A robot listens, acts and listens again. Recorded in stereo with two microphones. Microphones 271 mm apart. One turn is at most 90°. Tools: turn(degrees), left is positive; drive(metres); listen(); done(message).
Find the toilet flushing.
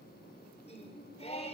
listen()
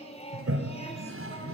turn(degrees=-50)
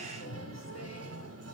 turn(degrees=-75)
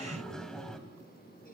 done("Facing the toilet flushing, 2 to 4 m away.")